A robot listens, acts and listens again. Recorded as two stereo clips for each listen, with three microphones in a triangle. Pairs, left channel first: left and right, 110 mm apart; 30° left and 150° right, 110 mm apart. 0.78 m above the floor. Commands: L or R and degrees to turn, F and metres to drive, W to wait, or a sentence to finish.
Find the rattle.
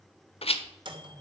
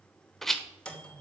L115
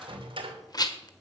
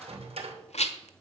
L35
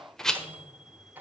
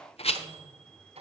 Found it: a rattle, straight ahead, 1 to 2 m away.